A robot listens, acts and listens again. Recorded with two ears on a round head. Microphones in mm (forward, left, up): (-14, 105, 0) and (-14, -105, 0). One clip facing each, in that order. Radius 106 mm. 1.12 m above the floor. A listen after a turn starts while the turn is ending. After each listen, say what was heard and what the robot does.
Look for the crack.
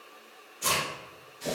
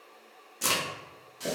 The crack: about 55° right or 125° right. Turn 55° right.
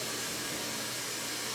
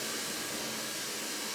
Keep listening.
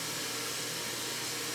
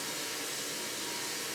I heard a crack, but can't make it out now. It was about straight ahead or 70° right.